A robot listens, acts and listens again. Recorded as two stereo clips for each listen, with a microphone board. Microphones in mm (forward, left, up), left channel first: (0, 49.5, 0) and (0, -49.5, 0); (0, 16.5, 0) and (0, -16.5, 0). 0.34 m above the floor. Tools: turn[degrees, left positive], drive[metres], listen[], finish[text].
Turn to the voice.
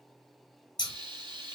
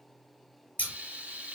Action: listen[]
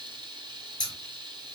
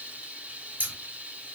Action: listen[]
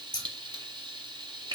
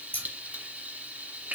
Action: finish[I can't make out anyone speaking, only frying and scissors.]